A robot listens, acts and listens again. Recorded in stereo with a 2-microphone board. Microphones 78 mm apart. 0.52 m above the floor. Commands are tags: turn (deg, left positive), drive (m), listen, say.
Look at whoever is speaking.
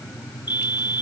<listen/>
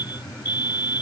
<listen/>
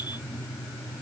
<say>I can't make out anyone speaking, only a fire alarm.</say>